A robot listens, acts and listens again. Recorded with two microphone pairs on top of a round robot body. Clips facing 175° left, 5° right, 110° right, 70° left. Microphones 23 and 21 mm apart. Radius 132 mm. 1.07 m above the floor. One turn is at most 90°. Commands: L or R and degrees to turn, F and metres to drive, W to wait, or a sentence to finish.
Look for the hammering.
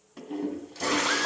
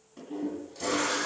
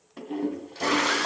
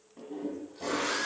W
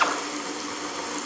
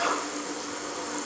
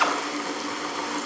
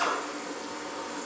W
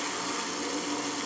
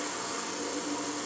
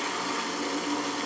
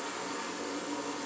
I can't make out hammering to turn to.